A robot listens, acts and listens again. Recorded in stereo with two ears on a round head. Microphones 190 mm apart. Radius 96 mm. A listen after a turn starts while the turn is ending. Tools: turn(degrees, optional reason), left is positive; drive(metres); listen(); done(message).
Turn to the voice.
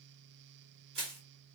listen()
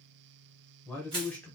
turn(degrees=30)
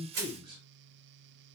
turn(degrees=-25, reason="So it is at 25° right.")
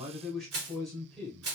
done("Found it: a man speaking, straight ahead.")